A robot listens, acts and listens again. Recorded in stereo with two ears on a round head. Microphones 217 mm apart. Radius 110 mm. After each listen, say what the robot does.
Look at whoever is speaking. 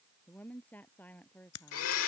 Turn 30° left.
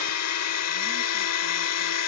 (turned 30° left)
Keep listening.
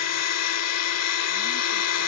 Keep listening.
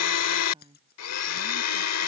Turn 20° right.
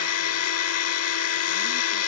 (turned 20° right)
Keep listening.
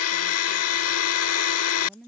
Facing the woman speaking.